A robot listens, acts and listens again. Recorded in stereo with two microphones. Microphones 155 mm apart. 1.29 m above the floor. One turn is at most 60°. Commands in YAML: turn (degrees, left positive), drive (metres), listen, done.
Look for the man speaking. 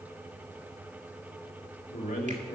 turn: 60
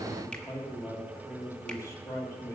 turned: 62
turn: 20
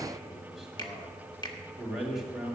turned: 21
done: "Found it: a man speaking, straight ahead, 2 to 4 m away."